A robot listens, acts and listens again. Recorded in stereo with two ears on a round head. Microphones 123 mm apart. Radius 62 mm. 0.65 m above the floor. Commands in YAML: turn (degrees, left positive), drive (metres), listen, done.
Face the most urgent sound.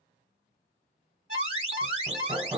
turn: -50
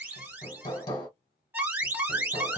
turn: -20
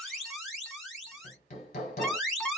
done: "Found it: an alarm, straight ahead, 2 to 4 m away."